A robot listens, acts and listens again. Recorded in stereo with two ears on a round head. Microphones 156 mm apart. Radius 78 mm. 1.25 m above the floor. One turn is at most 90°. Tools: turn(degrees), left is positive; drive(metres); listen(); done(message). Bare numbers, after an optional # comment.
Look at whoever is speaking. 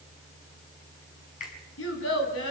turn(90)
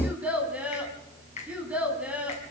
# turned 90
done("Facing the child speaking, over 4 m away.")